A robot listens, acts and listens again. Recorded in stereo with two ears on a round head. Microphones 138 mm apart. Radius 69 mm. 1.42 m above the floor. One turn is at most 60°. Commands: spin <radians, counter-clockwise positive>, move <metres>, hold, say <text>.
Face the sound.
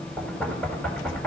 spin 0.52
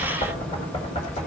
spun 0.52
spin 1.05
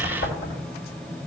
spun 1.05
spin 1.05
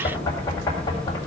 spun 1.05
spin 0.44
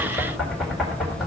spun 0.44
say Facing the knocking, 1 to 2 m away.